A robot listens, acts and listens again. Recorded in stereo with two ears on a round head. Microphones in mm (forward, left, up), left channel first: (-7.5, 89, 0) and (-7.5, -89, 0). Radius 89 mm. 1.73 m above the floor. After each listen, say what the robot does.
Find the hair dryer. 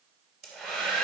Turn 30° left.
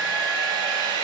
Turn 25° right.
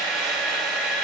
Found it: a hair dryer, straight ahead.